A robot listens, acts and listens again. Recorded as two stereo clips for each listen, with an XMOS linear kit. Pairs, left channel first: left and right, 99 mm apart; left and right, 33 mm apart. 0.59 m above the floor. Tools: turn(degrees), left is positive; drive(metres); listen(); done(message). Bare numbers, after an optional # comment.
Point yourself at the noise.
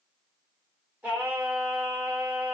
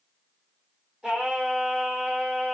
turn(-30)
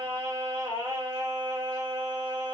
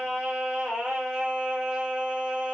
# So it is at 135° right.
turn(-135)
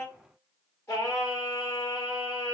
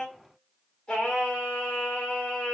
# The singing is now 30° left.
turn(30)
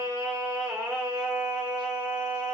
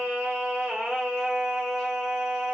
# The singing is now 10° right.
turn(-10)
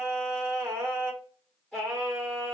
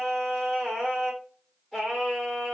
done("Facing the singing, 1 to 2 m away.")